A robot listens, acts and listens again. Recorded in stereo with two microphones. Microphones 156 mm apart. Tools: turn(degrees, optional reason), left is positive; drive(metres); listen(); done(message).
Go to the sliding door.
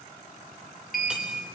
turn(degrees=65, reason="The sliding door: about 65° left or 115° left.")
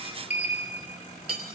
turn(degrees=50, reason="So it is at 50° left.")
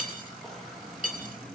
drive(metres=1.0)
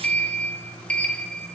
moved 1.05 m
turn(degrees=10, reason="The sliding door is now 10° left.")
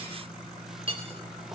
drive(metres=1.0)
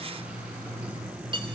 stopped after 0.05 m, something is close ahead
turn(degrees=-10, reason="The sliding door is now 10° right.")
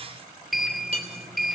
done("Arrived at the sliding door, straight ahead.")